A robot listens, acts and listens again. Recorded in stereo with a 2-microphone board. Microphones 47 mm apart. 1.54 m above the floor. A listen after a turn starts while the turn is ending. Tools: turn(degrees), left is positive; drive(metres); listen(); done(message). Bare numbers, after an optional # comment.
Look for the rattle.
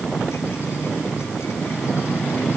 listen()
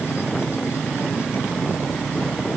listen()
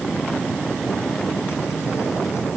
done("I can't make out a rattle.")